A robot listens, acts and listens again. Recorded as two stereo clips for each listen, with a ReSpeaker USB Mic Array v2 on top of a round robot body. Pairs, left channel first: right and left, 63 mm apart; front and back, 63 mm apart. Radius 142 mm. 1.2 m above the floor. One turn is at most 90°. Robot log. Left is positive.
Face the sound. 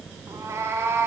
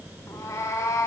note: The cat meowing: 40° left.
cmd yaw +40
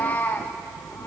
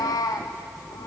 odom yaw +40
note: The cat meowing is now 30° right.
cmd yaw -30
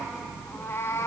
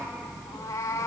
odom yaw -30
note: The cat meowing is now 45° right.
cmd yaw -45
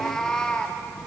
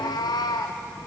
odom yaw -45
note: The cat meowing is now 15° right.
cmd yaw -15
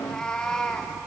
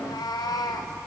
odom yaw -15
note: The cat meowing is now 10° right.
cmd yaw -10
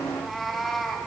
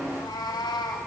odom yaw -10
end: Facing the cat meowing, 1 to 2 m away.